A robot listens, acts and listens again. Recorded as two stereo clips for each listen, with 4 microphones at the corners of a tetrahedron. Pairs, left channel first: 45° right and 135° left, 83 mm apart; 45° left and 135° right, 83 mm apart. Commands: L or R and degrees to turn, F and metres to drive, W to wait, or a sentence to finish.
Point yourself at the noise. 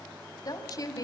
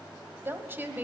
R70
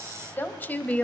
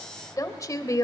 L20
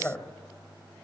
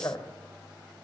L15
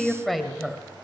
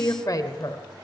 L50
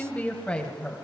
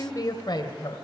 L35
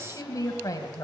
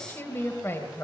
R10
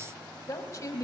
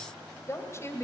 Facing the woman speaking, 1 to 2 m away.